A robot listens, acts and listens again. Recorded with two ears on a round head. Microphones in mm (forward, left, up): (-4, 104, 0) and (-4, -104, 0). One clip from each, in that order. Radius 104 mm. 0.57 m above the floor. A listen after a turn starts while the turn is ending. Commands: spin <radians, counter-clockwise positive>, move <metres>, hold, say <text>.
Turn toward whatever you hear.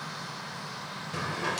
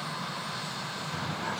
spin 1.57
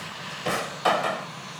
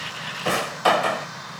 say Found it: a drawer, straight ahead.